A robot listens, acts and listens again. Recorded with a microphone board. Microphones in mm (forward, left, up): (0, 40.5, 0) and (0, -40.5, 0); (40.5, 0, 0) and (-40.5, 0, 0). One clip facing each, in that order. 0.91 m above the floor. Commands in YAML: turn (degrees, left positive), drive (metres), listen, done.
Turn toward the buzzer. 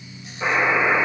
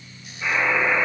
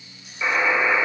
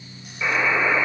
turn: 85
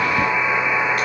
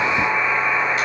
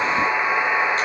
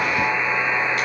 turn: -10
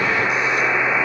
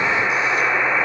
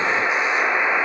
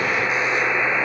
done: "Facing the buzzer, 2 to 4 m away."